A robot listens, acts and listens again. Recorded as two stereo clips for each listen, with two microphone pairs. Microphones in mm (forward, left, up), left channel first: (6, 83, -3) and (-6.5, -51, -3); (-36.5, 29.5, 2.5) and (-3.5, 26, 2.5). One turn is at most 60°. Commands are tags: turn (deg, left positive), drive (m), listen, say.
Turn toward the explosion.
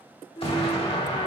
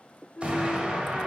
<turn deg="45"/>
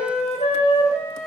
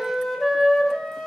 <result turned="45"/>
<say>I heard an explosion from this way, but can't make it out now.</say>